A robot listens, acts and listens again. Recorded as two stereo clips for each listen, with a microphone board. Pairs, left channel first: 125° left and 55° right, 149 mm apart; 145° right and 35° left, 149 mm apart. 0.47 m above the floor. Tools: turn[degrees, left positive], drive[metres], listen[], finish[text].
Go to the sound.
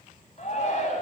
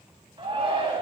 Thought: The shout: 85° left.
Action: turn[85]
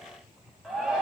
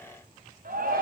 Thought: The shout is now 30° left.
Action: turn[30]
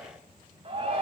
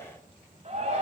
Action: drive[1.0]
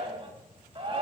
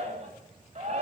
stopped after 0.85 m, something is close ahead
Action: finish[Something is in my way. I am facing the shout but have not reached it.]